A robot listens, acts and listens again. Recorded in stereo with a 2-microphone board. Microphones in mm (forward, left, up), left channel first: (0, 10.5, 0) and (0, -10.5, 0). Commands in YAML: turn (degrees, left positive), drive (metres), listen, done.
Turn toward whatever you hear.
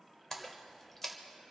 turn: 30
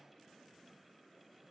listen: true
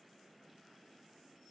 done: "I heard a splash, but can't make it out now. It was about 15° right or 135° left."